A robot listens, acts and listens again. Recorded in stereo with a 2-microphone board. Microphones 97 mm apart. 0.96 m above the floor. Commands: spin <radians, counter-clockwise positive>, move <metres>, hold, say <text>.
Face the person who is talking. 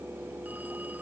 hold
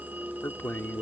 spin 0.35
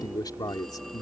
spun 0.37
spin 2.36
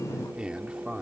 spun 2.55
spin -0.17
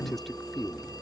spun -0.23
say Facing the man speaking.